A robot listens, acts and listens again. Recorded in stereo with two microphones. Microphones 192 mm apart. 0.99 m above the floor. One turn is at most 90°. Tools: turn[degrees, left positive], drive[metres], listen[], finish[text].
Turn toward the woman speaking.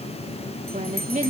Thought: The woman speaking: about 40° right or 140° right.
Action: turn[-40]
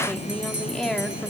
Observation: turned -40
Action: finish[Found it: a woman speaking, straight ahead, 2 to 4 m away.]